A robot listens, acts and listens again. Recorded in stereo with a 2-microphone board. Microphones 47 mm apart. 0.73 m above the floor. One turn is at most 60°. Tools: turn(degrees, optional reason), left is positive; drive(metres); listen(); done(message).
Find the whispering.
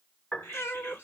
turn(degrees=55, reason="The whispering: about 55° left or 125° left.")
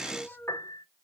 listen()
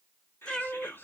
turn(degrees=60, reason="So it is at 60° left.")
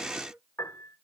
listen()
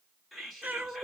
done("Found it: whispering, straight ahead.")